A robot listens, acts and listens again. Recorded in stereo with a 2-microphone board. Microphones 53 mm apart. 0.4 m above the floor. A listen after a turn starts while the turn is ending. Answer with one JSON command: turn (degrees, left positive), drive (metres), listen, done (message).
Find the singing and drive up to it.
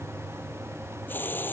{"listen": true}
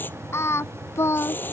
{"turn": 60}
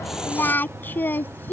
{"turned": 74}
{"turn": 45}
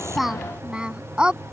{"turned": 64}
{"turn": -20}
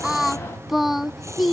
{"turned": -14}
{"drive": 1.0}
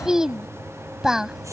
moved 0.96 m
{"turn": -10}
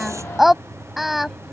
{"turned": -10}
{"drive": 1.0}
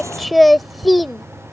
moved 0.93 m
{"drive": 1.0}
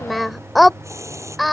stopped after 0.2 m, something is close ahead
{"done": "I am next to the singing."}